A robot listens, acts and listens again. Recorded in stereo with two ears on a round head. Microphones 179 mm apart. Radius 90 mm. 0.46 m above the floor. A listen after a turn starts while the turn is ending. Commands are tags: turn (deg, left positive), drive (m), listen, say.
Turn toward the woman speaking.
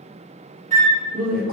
<turn deg="-45"/>
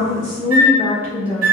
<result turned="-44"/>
<say>Found it: a woman speaking, straight ahead, 1 to 2 m away.</say>